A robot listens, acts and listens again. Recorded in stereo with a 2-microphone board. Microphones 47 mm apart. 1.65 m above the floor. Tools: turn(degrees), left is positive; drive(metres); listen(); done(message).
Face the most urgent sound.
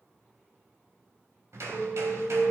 turn(degrees=40)
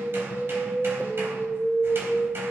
turn(degrees=105)
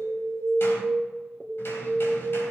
turn(degrees=-10)
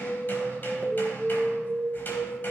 done("Facing the alarm.")